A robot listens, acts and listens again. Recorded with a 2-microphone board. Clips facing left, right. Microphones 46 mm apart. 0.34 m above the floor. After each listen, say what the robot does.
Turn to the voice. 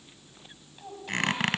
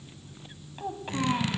Turn 35° right.
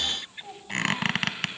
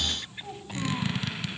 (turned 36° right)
Found it: a child speaking, straight ahead, 1 to 2 m away.